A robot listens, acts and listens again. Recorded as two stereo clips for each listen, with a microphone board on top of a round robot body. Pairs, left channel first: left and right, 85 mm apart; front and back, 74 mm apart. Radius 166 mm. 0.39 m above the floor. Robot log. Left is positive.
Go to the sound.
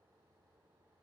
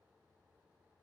cmd idle
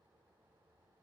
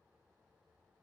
cmd idle
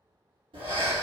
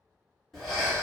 note: The breathing: 85° right.
cmd yaw -85
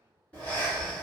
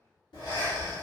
note: The breathing is now 15° left.
cmd yaw +15
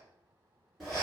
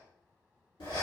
cmd fwd 1.0
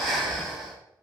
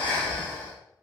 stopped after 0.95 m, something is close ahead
end: Arrived at the breathing, straight ahead.